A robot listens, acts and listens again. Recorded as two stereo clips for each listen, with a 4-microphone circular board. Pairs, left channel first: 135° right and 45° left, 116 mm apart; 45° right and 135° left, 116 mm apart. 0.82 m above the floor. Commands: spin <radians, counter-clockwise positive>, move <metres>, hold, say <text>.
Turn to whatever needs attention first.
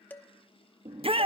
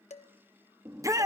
spin 1.31
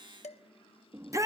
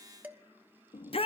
spin -0.26
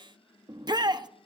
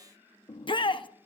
say Facing the shout.